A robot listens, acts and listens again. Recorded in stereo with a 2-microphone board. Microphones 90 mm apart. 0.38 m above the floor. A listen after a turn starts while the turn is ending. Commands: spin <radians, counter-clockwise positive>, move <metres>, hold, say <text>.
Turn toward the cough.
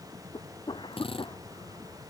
spin 1.13
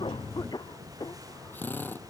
spin 0.87
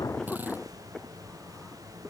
spin 0.17
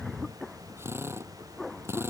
say Facing the cough.